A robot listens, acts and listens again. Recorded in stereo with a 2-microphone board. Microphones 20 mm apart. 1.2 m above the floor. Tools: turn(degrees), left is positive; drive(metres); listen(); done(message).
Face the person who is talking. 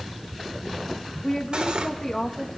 turn(degrees=25)
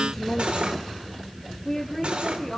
turn(degrees=20)
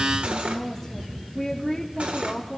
done("Found it: a woman speaking, straight ahead, 2 to 4 m away.")